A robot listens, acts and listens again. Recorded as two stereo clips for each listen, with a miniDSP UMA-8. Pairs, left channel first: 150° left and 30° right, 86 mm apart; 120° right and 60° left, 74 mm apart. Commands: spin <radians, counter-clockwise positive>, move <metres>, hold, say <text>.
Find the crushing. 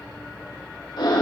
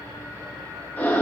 hold
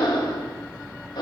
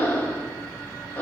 hold
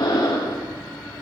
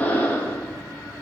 say I can't make out crushing to turn to.